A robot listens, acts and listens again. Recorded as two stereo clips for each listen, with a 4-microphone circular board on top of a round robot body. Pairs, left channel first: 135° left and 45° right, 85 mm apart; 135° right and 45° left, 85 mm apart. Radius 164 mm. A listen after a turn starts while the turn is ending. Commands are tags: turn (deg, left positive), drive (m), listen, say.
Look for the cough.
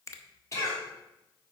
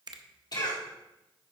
<turn deg="-170"/>
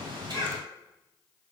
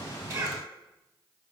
<listen/>
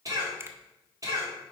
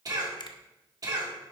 <say>Found it: a cough, straight ahead, 2 to 4 m away.</say>